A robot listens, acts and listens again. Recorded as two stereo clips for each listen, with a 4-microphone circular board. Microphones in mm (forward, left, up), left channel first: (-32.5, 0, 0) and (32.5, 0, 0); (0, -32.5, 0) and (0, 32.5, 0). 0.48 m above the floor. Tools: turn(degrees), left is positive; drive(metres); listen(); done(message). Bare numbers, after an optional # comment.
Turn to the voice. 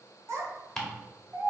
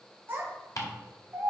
# The child speaking: 40° left.
turn(40)
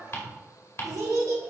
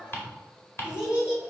# The child speaking is now 15° left.
turn(15)
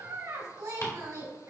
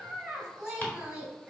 # The child speaking is now 15° left.
turn(15)
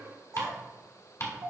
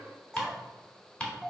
# The child speaking is now 10° left.
turn(10)
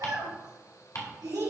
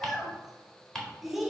done("Found it: a child speaking, straight ahead.")